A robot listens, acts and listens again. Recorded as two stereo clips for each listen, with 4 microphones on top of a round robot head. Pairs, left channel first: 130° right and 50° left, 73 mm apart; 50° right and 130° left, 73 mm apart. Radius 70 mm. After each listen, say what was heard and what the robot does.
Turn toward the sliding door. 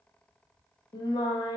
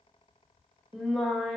Keep listening.
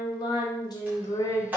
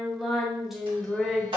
The sliding door: 120° left. Turn 120° left.
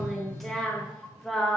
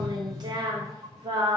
The sliding door is now 45° left. Turn 45° left.
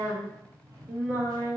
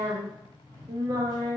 Found it: a sliding door, straight ahead.